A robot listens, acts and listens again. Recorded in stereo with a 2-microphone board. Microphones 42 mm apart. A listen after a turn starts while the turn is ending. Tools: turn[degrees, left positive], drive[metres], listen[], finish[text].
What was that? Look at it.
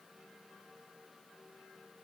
Action: listen[]
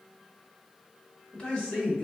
Thought: The man speaking: about 25° left or 155° left.
Action: turn[25]
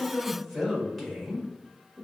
Action: finish[Facing the man speaking.]